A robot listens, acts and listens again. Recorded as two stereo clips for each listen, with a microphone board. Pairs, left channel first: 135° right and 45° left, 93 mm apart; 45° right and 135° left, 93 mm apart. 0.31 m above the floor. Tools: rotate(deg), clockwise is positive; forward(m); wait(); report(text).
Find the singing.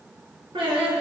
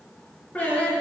rotate(-30)
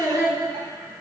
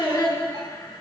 report("Facing the singing.")